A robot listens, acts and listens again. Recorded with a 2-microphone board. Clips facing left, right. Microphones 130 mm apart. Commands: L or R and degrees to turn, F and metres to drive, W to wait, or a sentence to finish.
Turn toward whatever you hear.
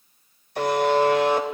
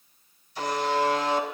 L60
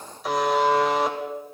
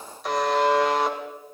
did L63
Facing the buzzer.